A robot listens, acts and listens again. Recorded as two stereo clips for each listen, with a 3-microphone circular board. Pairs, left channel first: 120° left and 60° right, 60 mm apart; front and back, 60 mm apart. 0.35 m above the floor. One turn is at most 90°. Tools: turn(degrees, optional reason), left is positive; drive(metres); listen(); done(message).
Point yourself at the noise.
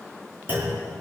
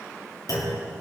done("Found it: a clunk, straight ahead, 2 to 4 m away.")